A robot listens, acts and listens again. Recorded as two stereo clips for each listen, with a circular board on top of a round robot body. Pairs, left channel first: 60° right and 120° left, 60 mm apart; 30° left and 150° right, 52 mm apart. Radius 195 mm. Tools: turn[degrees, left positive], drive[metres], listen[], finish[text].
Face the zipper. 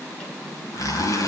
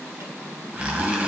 Thought: The zipper: 85° right.
Action: turn[-85]
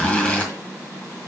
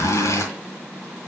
Thought: The zipper is now 10° left.
Action: turn[10]
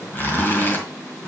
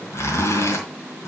Action: finish[Facing the zipper.]